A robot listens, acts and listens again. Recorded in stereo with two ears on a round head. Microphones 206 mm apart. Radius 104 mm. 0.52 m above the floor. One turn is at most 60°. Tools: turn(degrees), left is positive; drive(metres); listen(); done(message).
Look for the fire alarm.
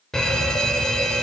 turn(degrees=30)
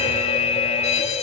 turn(degrees=60)
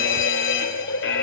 turn(degrees=60)
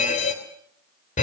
turn(degrees=40)
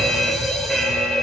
done("Facing the fire alarm.")